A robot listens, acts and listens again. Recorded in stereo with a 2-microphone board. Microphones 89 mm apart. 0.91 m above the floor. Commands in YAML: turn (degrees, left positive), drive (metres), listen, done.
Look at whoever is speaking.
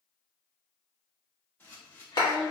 turn: 60
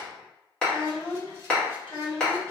turn: 60
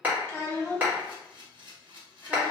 turn: 30
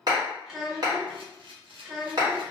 done: "Facing the child speaking, 1 to 2 m away."